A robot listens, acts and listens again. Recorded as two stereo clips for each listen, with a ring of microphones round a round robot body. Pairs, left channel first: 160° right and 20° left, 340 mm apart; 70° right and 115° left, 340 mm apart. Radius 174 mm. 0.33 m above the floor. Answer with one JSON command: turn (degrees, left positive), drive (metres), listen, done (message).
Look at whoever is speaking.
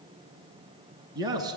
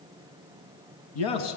{"turn": -55}
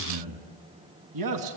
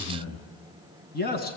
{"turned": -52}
{"done": "Facing the man speaking."}